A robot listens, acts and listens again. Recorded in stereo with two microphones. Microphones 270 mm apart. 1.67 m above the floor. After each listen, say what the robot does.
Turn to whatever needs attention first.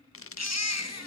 Turn 70° left.
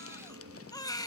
Turn 15° left.
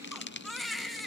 Found it: a baby crying, straight ahead, 1 to 2 m away.